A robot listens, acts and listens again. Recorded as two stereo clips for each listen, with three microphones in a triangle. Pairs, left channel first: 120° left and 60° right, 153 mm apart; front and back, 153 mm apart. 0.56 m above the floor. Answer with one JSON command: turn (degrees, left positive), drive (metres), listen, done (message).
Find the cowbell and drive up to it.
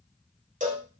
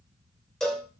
{"turn": -85}
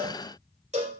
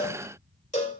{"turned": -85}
{"turn": -30}
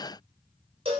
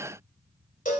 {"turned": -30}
{"turn": -15}
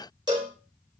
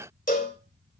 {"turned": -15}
{"drive": 1.0}
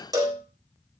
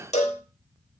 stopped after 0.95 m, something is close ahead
{"done": "I am next to the cowbell."}